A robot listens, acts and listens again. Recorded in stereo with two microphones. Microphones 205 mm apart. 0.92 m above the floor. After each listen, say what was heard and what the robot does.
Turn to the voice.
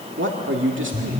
The man speaking: about 75° right or 105° right. Turn 75° right.
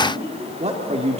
So it is at 30° right. Turn 30° right.
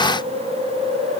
Keep listening.
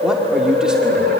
Keep listening.
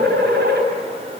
Facing where the man speaking came from. I can't hear it now.